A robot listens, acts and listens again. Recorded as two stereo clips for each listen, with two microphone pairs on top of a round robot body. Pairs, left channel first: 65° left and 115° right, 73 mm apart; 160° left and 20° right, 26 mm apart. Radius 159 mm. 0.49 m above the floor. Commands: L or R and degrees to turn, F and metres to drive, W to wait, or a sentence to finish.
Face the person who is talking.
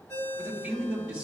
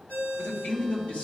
L170
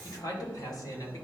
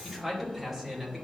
L40
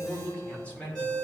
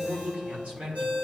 R10
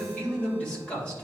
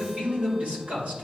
R10
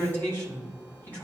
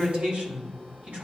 Facing the man speaking, 2 to 4 m away.